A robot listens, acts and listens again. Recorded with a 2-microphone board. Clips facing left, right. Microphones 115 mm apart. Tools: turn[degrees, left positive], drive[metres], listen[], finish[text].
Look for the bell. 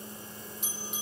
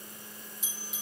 Thought: The bell: about 65° left or 115° left.
Action: turn[65]
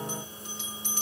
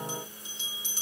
Thought: So it is at 55° left.
Action: turn[55]
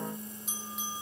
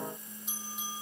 Action: finish[Found it: a bell, straight ahead, over 4 m away.]